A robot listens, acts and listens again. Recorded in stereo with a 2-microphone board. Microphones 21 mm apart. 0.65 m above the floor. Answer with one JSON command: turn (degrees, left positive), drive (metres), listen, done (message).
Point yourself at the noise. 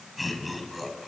{"turn": 30}
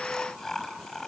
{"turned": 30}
{"turn": 155}
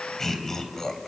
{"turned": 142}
{"turn": 20}
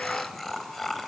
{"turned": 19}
{"turn": 10}
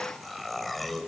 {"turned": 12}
{"done": "Found it: laughter, straight ahead, 2 to 4 m away."}